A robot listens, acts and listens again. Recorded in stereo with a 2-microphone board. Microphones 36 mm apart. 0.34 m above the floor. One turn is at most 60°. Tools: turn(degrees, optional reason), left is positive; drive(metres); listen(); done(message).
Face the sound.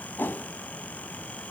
turn(degrees=60, reason="The whoosh: about 75° left or 105° left.")
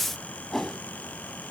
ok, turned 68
turn(degrees=10, reason="So it is at 10° left.")
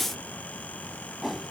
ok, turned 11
done("Found it: a whoosh, straight ahead, under 1 m away.")